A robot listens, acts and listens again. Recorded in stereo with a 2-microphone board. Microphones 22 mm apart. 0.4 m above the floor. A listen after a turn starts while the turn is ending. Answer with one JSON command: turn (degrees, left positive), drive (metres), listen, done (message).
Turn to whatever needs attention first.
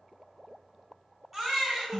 {"turn": 30}
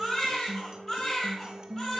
{"turn": 150}
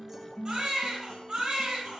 {"turn": -50}
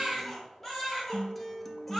{"done": "Found it: a baby crying, straight ahead, 2 to 4 m away."}